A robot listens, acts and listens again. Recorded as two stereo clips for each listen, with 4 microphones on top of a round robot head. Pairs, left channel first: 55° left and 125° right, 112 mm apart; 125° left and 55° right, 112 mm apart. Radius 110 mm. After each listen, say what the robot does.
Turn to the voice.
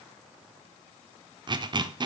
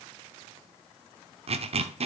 Keep listening.
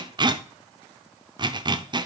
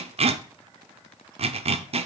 Keep listening.
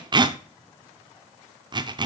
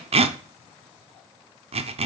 I can't make out anyone speaking to turn to.